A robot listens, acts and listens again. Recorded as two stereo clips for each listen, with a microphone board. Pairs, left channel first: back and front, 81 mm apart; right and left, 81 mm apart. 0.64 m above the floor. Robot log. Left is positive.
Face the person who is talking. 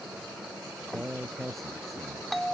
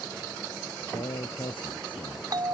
note: The man speaking: 90° right.
cmd yaw -90
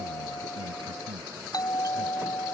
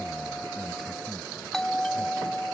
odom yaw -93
cmd idle
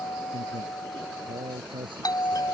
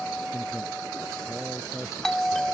end: Facing the man speaking.